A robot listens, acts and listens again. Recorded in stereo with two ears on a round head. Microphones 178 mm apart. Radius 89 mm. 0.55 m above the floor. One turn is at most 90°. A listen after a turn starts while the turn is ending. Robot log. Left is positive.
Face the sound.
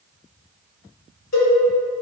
note: The cowbell: about 70° left or 110° left.
cmd yaw +70
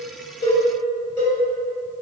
note: So it is at 20° left.
cmd yaw +20
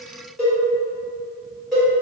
end: Found it: a cowbell, straight ahead.